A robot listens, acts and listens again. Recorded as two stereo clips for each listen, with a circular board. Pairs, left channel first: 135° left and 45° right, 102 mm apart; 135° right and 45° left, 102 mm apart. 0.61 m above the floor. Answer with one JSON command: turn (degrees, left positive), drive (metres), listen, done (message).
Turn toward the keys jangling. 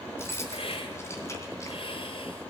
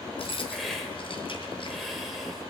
{"turn": -160}
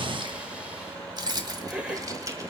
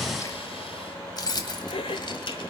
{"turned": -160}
{"turn": -100}
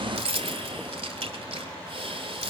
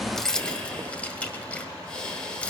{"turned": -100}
{"turn": -60}
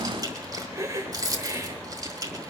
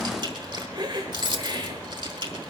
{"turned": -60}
{"done": "Found it: keys jangling, straight ahead."}